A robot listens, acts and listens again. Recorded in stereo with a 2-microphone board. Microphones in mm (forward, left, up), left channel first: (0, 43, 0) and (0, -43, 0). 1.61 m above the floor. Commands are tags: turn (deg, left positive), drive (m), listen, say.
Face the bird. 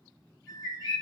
<turn deg="-35"/>
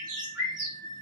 <turn deg="-100"/>
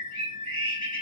<turn deg="15"/>
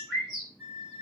<say>Found it: a bird, straight ahead, 1 to 2 m away.</say>